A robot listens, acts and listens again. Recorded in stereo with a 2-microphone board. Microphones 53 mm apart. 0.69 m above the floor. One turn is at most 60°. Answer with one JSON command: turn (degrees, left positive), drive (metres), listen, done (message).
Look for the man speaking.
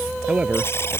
{"turn": -25}
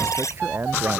{"turn": -60}
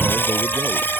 {"turn": -60}
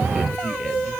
{"turn": -10}
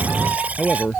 {"done": "Facing the man speaking."}